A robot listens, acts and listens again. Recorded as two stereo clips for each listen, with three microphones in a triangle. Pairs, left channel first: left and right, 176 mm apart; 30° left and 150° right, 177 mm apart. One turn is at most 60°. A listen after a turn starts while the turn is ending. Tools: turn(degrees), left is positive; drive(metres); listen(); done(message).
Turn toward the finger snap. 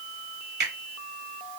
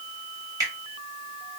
turn(degrees=-60)
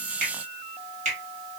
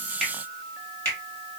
turn(degrees=-45)
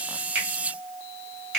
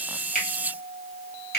done("Facing the finger snap, 1 to 2 m away.")